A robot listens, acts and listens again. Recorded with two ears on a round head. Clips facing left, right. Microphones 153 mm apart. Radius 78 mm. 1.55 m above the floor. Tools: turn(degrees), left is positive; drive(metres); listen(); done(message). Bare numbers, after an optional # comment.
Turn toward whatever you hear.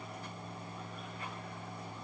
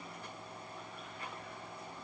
listen()
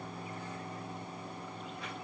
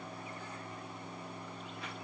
listen()
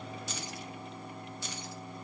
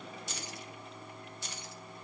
# The keys jangling: about 70° left or 110° left.
turn(70)
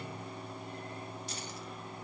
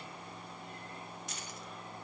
listen()
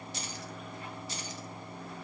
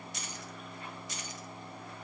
# So it is at 30° left.
turn(30)
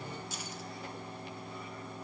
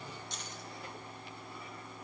listen()
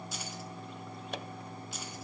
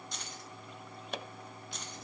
done("Facing the keys jangling, 1 to 2 m away.")